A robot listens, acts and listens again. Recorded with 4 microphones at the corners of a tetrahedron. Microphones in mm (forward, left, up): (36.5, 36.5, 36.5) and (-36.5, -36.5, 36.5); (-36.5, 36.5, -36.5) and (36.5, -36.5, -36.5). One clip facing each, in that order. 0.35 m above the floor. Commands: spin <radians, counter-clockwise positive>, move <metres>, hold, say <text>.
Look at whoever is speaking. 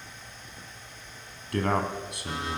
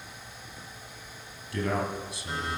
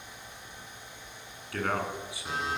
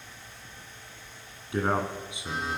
spin 0.35
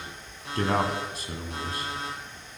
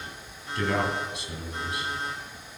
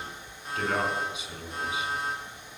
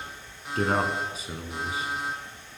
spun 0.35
say Facing the man speaking, 2 to 4 m away.